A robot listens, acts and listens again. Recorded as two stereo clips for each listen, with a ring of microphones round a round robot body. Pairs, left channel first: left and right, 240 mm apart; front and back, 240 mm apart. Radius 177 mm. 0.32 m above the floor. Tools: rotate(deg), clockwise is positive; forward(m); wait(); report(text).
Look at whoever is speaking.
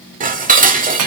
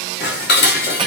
wait()
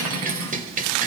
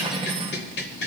wait()
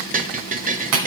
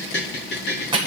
report("I can't make out anyone speaking, only cutlery clinking and dishes clattering.")